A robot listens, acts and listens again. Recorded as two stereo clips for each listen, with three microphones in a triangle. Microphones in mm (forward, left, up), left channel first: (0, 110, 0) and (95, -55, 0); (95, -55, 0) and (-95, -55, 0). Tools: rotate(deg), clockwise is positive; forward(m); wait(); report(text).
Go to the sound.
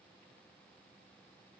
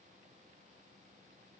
wait()
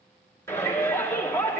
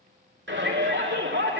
rotate(165)
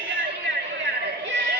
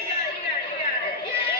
rotate(35)
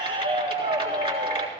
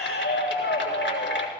forward(1.0)
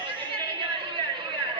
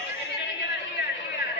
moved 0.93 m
forward(1.0)
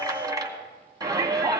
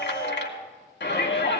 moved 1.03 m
rotate(-10)
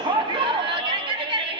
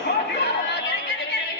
forward(1.0)
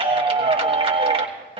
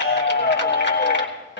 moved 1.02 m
forward(1.0)
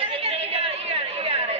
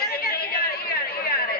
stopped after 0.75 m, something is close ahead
rotate(10)
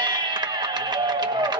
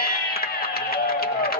report("Arrived at the shout, straight ahead.")